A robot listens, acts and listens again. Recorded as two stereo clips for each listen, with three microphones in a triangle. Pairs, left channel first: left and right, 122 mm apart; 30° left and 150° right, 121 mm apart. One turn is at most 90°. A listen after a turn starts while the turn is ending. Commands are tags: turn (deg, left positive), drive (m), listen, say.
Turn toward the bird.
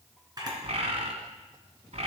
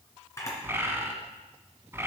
<turn deg="-85"/>
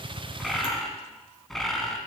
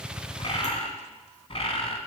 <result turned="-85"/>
<say>Found it: a bird, straight ahead.</say>